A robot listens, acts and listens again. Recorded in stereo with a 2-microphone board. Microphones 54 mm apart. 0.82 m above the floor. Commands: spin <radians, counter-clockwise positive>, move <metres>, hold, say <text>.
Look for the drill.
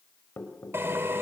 spin -0.87
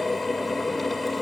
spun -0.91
say Facing the drill.